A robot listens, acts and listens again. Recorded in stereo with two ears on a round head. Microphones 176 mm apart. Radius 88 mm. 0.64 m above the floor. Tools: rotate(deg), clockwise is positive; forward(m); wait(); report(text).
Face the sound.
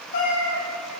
rotate(-55)
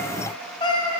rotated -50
rotate(-30)
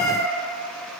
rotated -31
report("Facing the cat meowing.")